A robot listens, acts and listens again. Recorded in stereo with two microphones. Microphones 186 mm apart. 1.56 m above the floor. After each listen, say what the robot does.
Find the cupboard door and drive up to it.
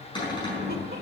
Turn 25° left.
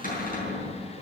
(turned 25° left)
Turn 130° left.
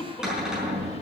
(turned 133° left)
Drive 1.0 m forward.
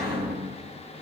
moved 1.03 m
Drive 1.0 m forward.
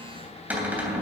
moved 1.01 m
Turn 10° right.
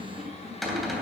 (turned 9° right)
Drive 1.0 m forward.
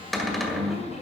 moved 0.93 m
Drive 1.0 m forward.
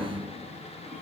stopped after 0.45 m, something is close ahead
I am next to the cupboard door.